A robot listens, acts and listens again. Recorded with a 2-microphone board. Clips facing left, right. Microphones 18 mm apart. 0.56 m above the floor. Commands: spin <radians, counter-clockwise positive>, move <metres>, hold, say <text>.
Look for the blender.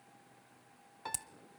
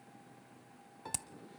hold
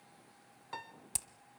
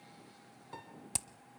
hold
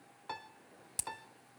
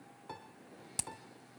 say I can't make out a blender to turn to.